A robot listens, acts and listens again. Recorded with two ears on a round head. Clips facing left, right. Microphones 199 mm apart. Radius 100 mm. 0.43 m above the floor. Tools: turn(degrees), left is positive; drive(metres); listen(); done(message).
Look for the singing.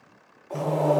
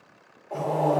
turn(degrees=40)
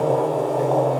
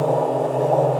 turn(degrees=35)
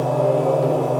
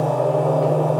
turn(degrees=20)
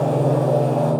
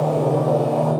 turn(degrees=10)
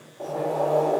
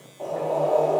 listen()
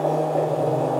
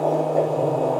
turn(degrees=10)
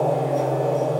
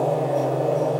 done("Found it: singing, straight ahead.")